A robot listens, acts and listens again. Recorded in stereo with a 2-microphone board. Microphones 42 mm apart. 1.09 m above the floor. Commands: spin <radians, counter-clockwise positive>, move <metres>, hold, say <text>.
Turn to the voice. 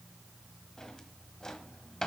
hold
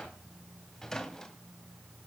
hold
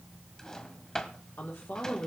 spin 1.05
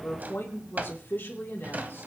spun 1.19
spin 0.96
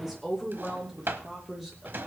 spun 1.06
say Facing the woman speaking.